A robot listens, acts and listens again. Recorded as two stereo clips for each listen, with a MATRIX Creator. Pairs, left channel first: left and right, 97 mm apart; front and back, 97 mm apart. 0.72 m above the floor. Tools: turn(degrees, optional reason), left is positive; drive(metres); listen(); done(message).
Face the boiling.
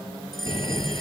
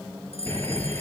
turn(degrees=65, reason="The boiling: 65° left.")
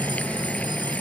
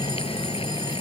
turn(degrees=15, reason="The boiling is now 15° left.")
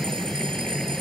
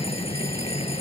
done("Facing the boiling.")